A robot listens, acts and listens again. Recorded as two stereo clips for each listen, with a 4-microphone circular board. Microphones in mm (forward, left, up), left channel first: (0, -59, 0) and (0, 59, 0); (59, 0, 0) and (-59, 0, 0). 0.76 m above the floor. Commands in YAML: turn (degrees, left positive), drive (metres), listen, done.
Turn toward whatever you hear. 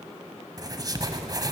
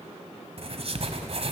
turn: 145
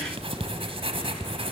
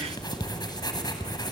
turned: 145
turn: 55
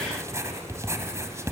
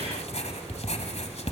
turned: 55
turn: 25
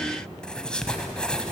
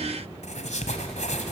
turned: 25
done: "Found it: writing, straight ahead."